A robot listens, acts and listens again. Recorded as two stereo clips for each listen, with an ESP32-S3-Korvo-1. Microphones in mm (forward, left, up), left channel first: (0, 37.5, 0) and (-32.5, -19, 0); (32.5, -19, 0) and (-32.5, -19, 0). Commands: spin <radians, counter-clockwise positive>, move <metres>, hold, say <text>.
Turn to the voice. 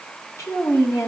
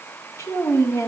spin 0.61
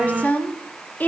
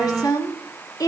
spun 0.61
say Found it: a woman speaking, straight ahead, 2 to 4 m away.